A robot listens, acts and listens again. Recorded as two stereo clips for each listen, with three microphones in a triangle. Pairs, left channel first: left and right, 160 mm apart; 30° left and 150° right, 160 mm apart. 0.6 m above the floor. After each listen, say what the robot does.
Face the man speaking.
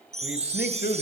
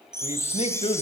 Turn 80° left.
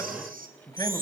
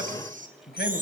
Keep listening.
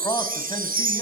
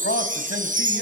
Turn 25° left.
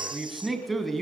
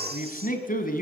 Facing the man speaking, over 4 m away.